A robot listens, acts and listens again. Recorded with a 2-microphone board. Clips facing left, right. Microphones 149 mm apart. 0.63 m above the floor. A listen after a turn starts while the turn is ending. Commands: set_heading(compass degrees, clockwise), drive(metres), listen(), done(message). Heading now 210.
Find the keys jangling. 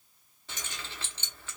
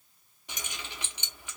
set_heading(240)
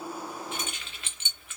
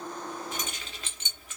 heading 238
set_heading(13)
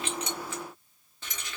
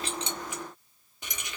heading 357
set_heading(12)
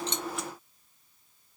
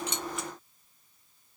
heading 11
listen()
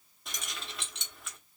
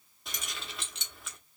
done("Facing the keys jangling, under 1 m away.")